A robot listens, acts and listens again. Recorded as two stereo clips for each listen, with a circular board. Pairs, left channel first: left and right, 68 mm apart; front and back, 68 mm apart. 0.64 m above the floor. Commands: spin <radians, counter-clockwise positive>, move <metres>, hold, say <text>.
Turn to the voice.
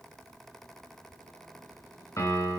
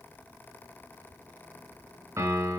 hold
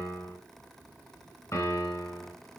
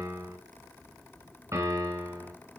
hold
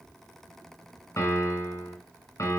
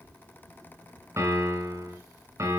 say I can't make out anyone speaking, only a piano.